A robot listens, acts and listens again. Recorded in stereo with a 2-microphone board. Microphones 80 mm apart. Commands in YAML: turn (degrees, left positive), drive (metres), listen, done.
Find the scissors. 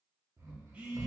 listen: true
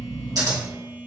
turn: -55
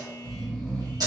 turn: -65
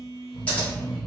listen: true
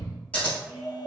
turn: 20
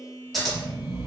done: "Facing the scissors, 1 to 2 m away."